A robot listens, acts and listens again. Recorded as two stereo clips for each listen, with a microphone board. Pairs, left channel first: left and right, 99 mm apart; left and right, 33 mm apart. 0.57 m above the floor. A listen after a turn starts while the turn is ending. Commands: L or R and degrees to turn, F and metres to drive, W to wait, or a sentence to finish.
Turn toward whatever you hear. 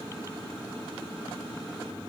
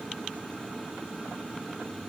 W
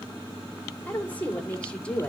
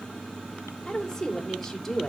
L30
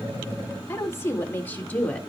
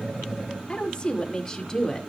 L30
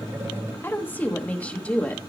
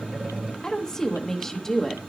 L30
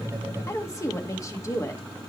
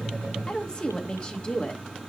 L145
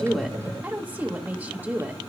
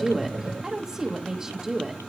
R20
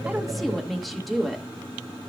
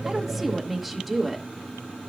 Facing the woman speaking.